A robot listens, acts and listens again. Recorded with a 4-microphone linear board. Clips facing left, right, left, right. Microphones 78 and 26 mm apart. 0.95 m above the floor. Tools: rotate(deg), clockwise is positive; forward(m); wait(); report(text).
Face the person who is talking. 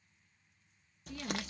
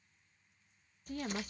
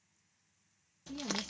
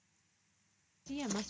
rotate(50)
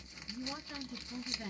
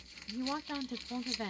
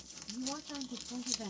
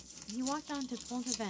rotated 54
rotate(75)
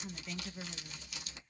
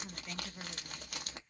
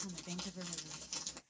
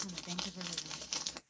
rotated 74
report("Found it: a woman speaking, straight ahead.")